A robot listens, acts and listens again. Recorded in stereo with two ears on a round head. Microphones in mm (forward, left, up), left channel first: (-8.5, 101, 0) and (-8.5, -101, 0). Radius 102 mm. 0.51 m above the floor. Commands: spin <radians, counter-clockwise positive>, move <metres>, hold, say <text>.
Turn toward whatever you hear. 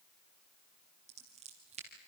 spin -0.52
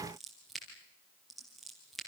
say Found it: scissors, straight ahead.